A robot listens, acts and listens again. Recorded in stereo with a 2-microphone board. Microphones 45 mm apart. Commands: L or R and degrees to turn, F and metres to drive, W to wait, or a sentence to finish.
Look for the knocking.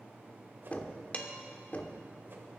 L35
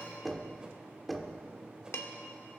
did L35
Found it: knocking, straight ahead.